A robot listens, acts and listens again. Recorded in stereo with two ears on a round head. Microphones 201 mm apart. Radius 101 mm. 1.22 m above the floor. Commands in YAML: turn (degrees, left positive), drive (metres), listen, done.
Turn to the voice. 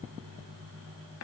listen: true
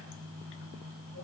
listen: true
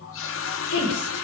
turn: 70
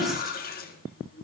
done: "Facing the woman speaking, over 4 m away."